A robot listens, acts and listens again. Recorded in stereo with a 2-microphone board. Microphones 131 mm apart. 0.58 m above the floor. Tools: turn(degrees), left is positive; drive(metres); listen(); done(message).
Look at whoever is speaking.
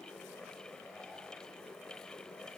listen()
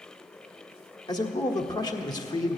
turn(degrees=30)
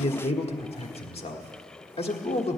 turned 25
turn(degrees=120)
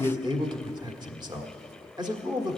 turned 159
turn(degrees=-40)
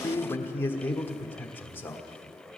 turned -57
turn(degrees=20)
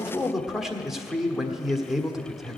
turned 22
done("Facing the man speaking.")